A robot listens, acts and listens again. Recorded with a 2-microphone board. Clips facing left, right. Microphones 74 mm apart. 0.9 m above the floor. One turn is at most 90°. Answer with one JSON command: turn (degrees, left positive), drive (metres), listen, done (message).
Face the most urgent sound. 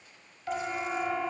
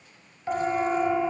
{"turn": -20}
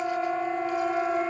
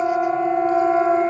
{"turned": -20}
{"turn": -90}
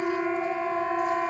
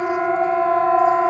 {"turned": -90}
{"turn": -50}
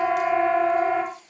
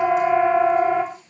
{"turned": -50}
{"done": "Found it: a siren, straight ahead."}